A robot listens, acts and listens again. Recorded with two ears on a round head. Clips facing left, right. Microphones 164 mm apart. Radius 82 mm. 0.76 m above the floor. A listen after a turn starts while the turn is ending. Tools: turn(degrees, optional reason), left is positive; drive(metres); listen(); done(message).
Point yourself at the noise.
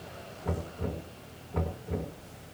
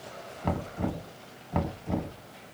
turn(degrees=-90)
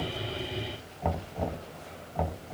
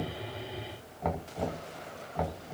done("Found it: knocking, straight ahead.")